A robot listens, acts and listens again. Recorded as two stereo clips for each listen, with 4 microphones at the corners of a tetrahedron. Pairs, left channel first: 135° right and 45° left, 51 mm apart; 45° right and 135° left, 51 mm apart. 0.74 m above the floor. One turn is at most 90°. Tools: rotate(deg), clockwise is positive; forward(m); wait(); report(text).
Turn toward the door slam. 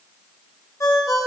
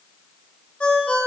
wait()
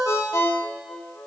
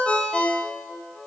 wait()
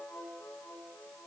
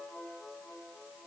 report("I can't make out a door slam, only a ringtone.")